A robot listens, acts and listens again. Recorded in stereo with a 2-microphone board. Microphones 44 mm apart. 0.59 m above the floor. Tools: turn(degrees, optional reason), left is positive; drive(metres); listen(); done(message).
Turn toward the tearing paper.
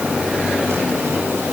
listen()
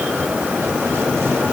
listen()
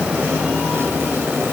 done("I can't make out tearing paper.")